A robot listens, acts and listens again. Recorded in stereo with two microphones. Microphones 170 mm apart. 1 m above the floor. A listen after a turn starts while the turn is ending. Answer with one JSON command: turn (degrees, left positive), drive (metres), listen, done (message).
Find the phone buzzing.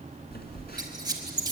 {"turn": 70}
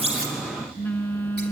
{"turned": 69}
{"turn": 10}
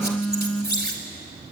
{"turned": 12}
{"done": "Facing the phone buzzing, 2 to 4 m away."}